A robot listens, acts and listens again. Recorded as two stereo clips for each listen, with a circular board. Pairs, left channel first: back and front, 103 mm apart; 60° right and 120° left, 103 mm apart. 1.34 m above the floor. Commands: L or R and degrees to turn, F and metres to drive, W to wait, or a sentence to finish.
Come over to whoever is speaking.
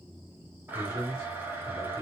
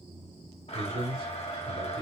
L125
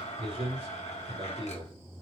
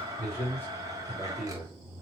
L10
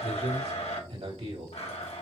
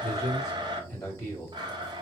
F1.0
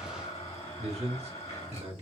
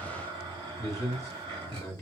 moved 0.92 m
F1.0
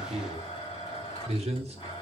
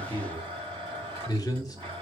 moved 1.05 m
F1.0
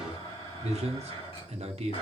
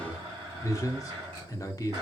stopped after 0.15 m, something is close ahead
I am next to the man speaking.